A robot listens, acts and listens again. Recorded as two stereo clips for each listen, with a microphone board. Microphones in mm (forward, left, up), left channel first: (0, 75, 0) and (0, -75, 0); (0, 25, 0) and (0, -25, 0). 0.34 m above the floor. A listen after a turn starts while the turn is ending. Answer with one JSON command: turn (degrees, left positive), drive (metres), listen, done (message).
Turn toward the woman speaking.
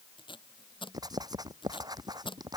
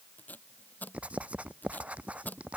{"listen": true}
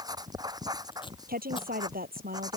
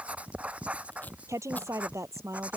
{"turn": -90}
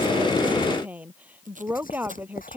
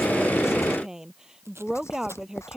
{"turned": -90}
{"turn": -10}
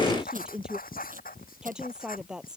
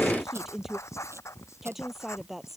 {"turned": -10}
{"done": "Found it: a woman speaking, straight ahead."}